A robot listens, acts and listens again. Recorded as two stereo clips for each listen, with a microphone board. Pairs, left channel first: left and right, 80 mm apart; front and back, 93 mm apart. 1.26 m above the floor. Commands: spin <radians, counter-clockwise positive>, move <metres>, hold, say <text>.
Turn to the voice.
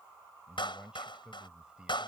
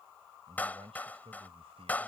spin -2.97
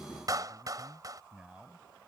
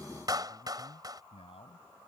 spin -0.17
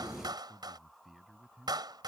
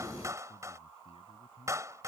say Facing the man speaking.